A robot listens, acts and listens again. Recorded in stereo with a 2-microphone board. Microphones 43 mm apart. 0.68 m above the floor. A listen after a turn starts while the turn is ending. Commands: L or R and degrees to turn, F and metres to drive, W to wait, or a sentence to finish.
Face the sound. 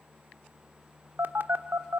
R55
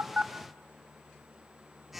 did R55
Found it: a phone buzzing, straight ahead, 1 to 2 m away.